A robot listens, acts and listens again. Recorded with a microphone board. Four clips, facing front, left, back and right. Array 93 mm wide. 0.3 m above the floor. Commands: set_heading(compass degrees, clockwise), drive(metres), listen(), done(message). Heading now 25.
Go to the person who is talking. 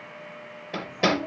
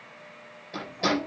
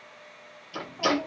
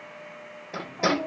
set_heading(150)
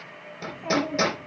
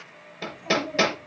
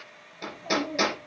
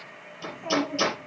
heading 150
set_heading(180)
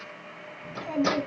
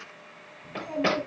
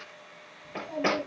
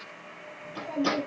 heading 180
set_heading(165)
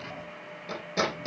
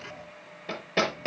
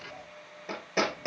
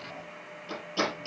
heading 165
listen()
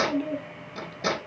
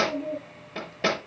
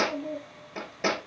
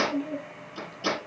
drive(1.0)
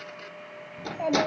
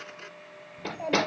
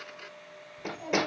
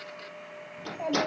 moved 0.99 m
drive(1.0)
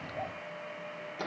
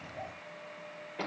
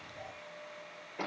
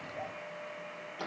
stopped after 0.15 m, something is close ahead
done("I am next to the child speaking.")